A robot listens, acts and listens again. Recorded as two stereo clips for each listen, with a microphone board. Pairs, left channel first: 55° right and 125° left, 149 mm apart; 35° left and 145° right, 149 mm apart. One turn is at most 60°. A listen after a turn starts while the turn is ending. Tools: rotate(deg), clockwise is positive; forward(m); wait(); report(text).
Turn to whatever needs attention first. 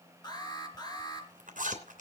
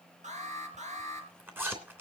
rotate(60)
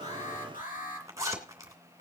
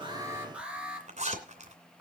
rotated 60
rotate(60)
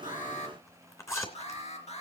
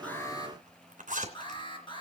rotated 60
rotate(20)
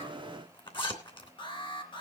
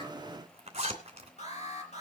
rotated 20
report("Facing the alarm, 2 to 4 m away.")